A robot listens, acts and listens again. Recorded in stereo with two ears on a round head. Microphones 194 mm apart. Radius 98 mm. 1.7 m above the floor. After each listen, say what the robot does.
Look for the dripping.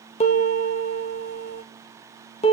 Keep listening.
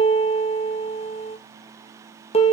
Keep listening.
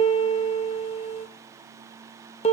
I can't make out dripping, only a piano.